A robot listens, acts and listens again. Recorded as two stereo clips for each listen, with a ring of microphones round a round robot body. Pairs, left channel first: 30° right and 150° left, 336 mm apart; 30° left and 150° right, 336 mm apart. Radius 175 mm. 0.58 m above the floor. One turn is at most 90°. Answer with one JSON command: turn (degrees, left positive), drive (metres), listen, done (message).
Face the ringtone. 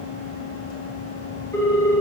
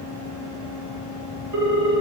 {"turn": -90}
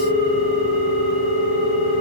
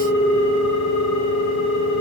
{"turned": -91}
{"turn": -20}
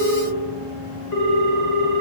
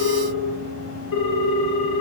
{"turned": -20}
{"done": "Found it: a ringtone, straight ahead."}